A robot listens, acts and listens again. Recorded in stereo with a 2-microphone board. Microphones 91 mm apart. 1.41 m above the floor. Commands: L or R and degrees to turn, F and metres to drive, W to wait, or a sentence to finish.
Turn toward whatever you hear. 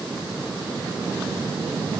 W
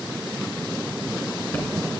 W
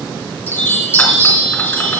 L25
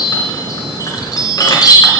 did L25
L130
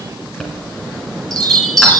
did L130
Facing the chime.